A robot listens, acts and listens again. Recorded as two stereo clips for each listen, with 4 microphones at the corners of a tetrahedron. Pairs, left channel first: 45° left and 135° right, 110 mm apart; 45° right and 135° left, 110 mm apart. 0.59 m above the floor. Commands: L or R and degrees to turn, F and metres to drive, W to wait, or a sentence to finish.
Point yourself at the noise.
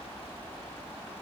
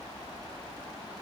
W
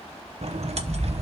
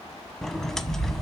R130
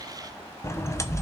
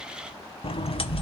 R15
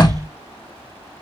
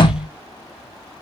Found it: a sliding door, straight ahead.